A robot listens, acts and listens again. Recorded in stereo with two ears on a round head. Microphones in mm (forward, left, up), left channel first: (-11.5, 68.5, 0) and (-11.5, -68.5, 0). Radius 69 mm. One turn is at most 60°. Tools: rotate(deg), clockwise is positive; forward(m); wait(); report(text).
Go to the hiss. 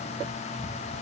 wait()
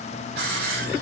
rotate(60)
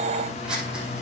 wait()
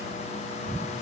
wait()
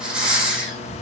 forward(1.0)
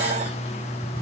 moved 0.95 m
wait()
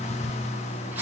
wait()
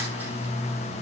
report("Facing where the hiss came from. I can't hear it now. I did not reach it.")